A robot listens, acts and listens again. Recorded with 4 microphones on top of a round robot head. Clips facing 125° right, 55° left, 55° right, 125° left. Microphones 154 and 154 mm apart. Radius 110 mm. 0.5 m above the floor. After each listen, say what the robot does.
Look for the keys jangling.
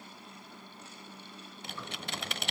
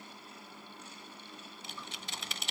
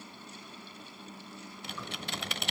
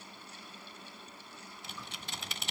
Keep listening.
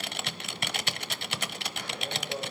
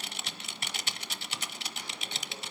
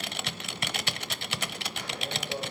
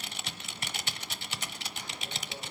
Keep listening.
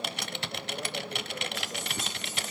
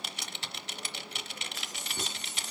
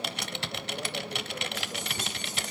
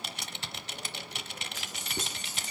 Turn 145° left.
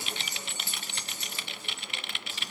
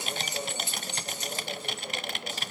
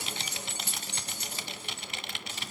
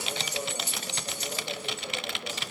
Turn 15° right.
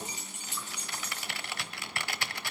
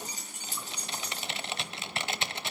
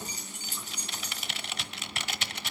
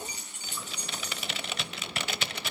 Found it: keys jangling, straight ahead, over 4 m away.